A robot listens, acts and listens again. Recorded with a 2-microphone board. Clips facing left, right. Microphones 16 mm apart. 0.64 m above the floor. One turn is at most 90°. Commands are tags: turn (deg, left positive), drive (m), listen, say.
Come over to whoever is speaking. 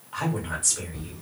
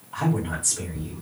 <turn deg="40"/>
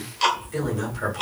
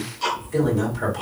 <drive m="1.0"/>
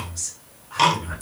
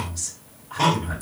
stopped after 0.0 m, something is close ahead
<say>Something is in my way. I am facing the woman speaking but have not reached it.</say>